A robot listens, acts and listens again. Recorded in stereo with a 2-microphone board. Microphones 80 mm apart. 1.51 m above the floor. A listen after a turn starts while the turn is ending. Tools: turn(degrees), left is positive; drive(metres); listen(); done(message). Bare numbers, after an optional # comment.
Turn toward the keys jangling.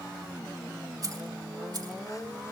# The keys jangling: about 55° right or 125° right.
turn(-55)
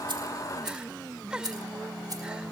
# So it is at 50° right.
turn(-50)
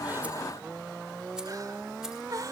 listen()
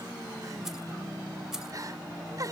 done("Facing the keys jangling.")